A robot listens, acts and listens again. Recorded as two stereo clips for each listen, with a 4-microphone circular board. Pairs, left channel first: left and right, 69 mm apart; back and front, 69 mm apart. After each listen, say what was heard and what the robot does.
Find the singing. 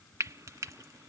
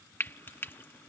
Keep listening.
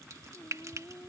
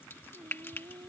The singing: 20° left. Turn 20° left.
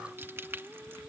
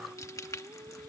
Found it: singing, straight ahead.